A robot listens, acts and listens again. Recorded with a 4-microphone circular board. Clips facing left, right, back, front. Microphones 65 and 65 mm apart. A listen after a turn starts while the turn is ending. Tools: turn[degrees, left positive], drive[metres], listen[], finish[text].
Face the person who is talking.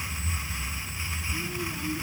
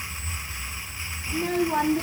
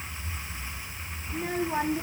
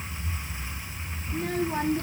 Thought: The child speaking: 100° right.
Action: turn[-100]
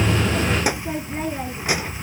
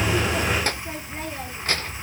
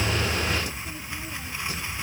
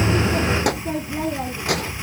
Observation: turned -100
Thought: The child speaking is now 10° left.
Action: turn[10]
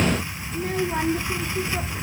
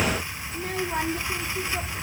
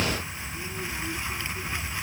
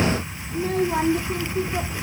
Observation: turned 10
Action: finish[Facing the child speaking.]